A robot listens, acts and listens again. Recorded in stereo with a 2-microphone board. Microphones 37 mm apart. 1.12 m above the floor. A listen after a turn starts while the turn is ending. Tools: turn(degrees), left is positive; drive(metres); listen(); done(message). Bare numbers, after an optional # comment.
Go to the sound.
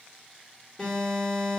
turn(30)
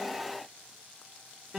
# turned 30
# So it is at 15° right.
turn(-15)
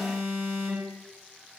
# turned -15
drive(1.0)
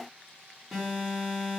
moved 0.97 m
drive(1.0)
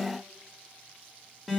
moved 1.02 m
# The alarm is now 10° right.
turn(-10)
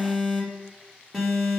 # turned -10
drive(1.0)
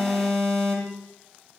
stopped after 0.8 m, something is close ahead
# The alarm is now 10° left.
turn(10)
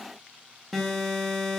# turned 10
done("Arrived at the alarm, straight ahead.")